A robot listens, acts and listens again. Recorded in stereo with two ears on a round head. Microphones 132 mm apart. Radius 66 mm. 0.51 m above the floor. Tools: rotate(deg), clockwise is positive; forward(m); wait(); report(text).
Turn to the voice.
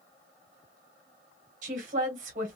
rotate(55)
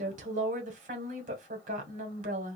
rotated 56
rotate(60)
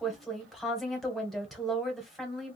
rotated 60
report("Facing the woman speaking.")